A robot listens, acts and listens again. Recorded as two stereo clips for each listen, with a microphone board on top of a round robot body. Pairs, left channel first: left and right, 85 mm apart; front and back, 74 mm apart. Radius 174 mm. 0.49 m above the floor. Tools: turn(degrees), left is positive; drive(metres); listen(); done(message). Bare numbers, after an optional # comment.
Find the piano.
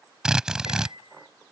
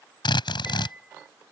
# The piano: 105° left.
turn(105)
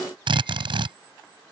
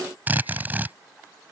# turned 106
listen()
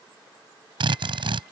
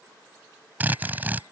listen()
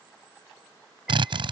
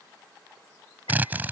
done("I heard a piano from this way, but can't make it out now.")